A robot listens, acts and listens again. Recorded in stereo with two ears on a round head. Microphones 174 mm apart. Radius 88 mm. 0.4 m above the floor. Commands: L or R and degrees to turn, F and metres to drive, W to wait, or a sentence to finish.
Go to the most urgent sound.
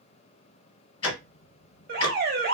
R55
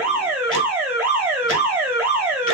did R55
R15
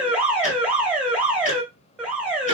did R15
F1.0
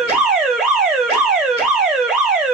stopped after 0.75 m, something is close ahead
R10
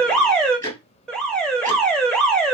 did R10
Arrived at the alarm, straight ahead.